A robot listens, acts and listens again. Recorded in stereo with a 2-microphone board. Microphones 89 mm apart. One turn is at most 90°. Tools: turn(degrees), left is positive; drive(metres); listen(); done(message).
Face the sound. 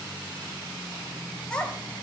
turn(degrees=30)
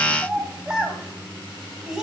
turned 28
done("Facing the child speaking, 2 to 4 m away.")